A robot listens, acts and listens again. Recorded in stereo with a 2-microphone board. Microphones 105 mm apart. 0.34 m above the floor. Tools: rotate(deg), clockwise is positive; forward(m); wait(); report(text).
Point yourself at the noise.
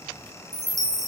rotate(35)
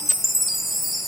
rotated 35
report("Facing the chime, 1 to 2 m away.")